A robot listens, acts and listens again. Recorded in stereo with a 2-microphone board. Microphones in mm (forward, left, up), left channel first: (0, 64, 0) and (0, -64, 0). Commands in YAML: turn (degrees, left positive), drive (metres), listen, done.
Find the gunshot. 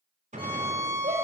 turn: -65
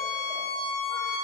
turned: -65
listen: true
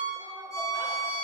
done: "I heard a gunshot, but can't make it out now. It was about straight ahead or 50° right."